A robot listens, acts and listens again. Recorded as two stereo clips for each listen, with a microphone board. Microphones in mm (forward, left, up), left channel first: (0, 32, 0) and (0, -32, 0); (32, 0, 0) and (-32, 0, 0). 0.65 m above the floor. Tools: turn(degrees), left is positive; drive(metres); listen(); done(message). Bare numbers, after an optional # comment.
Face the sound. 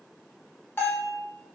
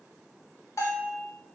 # The bell: 35° left.
turn(35)
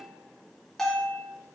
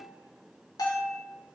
done("Found it: a bell, straight ahead.")